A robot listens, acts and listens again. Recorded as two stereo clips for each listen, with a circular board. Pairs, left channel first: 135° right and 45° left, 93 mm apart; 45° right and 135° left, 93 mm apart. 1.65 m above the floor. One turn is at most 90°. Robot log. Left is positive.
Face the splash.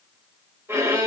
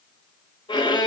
cmd idle
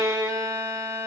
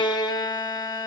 cmd idle
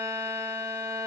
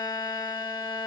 end: I can't make out a splash to turn to.